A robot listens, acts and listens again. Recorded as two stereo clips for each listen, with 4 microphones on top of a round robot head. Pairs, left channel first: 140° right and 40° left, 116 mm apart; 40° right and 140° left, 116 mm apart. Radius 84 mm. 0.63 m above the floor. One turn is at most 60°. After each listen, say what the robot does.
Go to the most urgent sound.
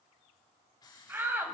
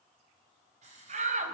Turn 60° left.
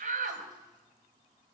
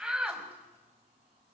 Turn 55° left.
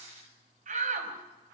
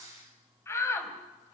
Turn 25° left.
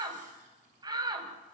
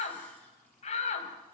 Turn 15° right.
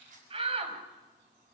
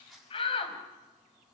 Drive 1.0 m forward.
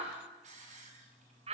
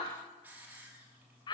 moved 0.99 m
Turn 10° left.
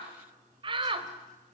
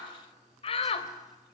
Drive 1.0 m forward.
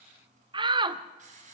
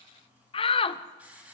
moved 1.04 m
Drive 1.0 m forward.
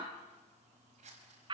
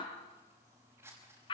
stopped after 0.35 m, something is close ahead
I am next to the shout.